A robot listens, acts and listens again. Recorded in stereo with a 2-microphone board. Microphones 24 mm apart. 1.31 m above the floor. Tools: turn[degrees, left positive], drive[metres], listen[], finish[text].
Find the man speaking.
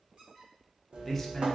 Action: turn[30]
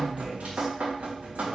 Action: listen[]
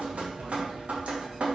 Action: listen[]
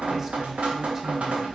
Action: finish[I heard a man speaking, but can't make it out now. It was about 20° right or 140° left.]